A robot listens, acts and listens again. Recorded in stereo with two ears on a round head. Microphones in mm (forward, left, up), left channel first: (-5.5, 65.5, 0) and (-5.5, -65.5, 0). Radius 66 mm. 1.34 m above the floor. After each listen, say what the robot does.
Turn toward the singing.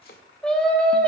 Turn 30° left.
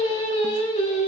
Turn 130° left.
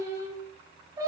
Turn 25° right.
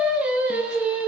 Turn 10° right.
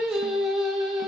Found it: singing, straight ahead, 2 to 4 m away.